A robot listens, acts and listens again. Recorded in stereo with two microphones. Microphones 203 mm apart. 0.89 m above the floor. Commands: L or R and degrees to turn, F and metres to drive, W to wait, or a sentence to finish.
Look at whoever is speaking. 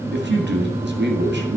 R60
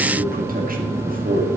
R50
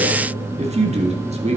R35
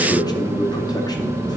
L20
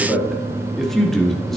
Facing the man speaking.